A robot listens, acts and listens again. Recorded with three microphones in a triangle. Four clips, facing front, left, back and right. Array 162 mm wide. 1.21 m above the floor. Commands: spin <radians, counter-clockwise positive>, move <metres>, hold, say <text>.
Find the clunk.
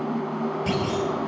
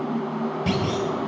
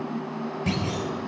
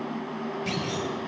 spin 1.92
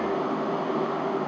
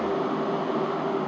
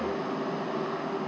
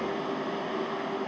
say I heard a clunk from this way, but can't make it out now.